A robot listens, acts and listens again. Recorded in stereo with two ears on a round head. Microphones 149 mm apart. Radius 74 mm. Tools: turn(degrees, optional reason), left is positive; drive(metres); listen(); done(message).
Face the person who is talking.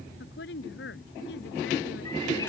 turn(degrees=70, reason="The woman speaking: about 70° left or 110° left.")
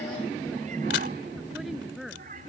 done("Found it: a woman speaking, straight ahead.")